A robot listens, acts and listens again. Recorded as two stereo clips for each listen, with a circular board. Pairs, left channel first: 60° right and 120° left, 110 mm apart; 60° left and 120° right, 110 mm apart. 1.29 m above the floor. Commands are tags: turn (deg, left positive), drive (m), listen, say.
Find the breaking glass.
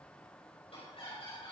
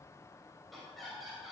<listen/>
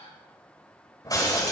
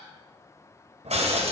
<turn deg="-115"/>
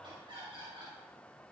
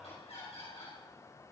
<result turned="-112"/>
<say>Facing where the breaking glass came from. I can't hear it now.</say>